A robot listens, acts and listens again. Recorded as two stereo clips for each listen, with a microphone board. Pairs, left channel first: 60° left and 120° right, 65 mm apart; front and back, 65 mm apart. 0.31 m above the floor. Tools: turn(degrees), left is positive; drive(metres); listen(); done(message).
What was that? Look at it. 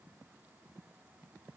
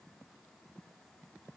listen()
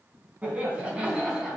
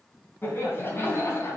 turn(degrees=-40)
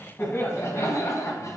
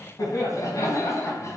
turn(degrees=30)
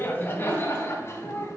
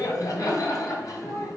turn(degrees=20)
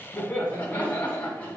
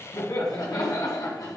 done("Facing the laughter, 2 to 4 m away.")